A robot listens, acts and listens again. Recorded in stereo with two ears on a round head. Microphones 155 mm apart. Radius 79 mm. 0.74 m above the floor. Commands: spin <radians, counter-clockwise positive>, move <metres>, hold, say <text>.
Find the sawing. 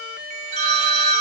hold
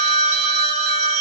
hold
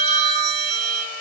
say I can't make out sawing, only a phone ringing.